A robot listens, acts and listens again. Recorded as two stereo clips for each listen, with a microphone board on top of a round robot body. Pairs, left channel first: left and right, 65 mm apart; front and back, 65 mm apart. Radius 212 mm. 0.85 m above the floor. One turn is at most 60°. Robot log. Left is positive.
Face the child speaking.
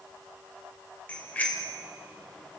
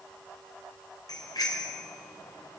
cmd idle
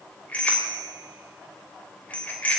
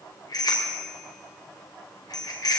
cmd idle
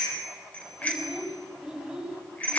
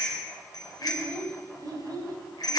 note: The child speaking: 175° right.
cmd yaw -60
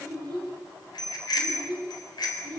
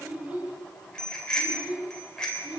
note: The child speaking is now 115° right.
cmd yaw -60
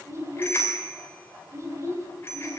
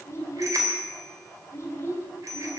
note: The child speaking is now 50° right.
cmd yaw -50
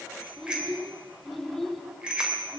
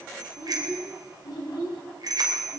end: Facing the child speaking, over 4 m away.